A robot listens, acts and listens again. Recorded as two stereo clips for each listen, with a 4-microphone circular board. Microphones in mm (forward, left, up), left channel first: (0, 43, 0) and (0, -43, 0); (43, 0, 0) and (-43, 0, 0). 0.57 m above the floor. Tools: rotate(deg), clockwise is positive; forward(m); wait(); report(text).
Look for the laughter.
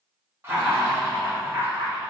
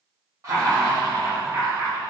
rotate(155)
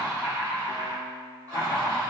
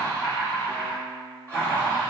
rotate(60)
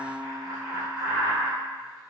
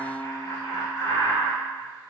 rotate(10)
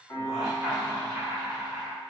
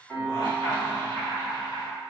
report("Facing the laughter.")